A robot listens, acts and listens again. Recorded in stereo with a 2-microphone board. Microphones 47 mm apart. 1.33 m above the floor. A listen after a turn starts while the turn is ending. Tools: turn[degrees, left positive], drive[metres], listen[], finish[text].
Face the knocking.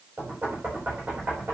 Thought: The knocking: about 45° right or 135° right.
Action: turn[-45]
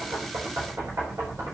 Thought: So it is at 90° right.
Action: turn[-90]
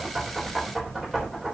Action: finish[Facing the knocking, over 4 m away.]